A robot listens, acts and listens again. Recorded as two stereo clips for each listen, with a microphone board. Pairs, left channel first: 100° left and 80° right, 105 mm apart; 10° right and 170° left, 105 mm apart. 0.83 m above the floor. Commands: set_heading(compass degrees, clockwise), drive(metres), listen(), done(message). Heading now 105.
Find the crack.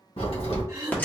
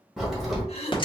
set_heading(20)
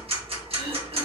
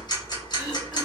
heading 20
done("Facing where the crack came from. I can't hear it now.")